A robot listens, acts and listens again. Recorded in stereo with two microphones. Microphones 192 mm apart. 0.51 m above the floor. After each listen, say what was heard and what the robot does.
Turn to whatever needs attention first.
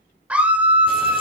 Turn 30° right.
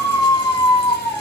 So it is at 25° left. Turn 25° left.
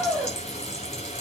Found it: a scream, straight ahead, 1 to 2 m away.